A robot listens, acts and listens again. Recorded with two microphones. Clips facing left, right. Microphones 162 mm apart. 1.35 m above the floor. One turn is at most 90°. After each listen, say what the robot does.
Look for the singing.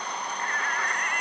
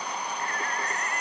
Turn 30° right.
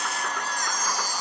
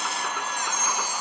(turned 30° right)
Found it: singing, straight ahead.